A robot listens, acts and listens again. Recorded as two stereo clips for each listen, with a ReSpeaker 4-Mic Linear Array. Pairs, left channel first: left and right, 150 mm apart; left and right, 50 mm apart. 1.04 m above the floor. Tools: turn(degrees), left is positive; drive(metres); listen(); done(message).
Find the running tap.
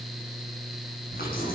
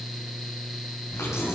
turn(degrees=90)
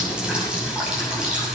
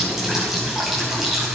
done("Facing the running tap, over 4 m away.")